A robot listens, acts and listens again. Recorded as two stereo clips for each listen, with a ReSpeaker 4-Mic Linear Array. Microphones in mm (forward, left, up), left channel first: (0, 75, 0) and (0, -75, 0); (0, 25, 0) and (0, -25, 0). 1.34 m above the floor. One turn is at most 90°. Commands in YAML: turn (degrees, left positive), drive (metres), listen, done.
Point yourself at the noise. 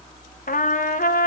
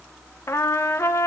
turn: 65
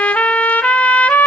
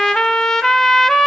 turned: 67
turn: 10
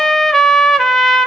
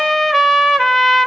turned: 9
done: "Facing the trumpet."